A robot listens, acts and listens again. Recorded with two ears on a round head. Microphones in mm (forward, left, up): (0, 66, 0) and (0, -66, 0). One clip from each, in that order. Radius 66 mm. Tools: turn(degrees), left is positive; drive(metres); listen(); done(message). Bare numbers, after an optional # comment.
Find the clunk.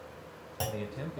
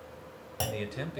# The clunk: about 15° right or 165° right.
turn(-15)
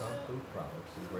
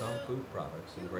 listen()
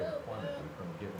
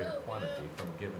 done("I heard a clunk, but can't make it out now. It was about straight ahead or 150° right.")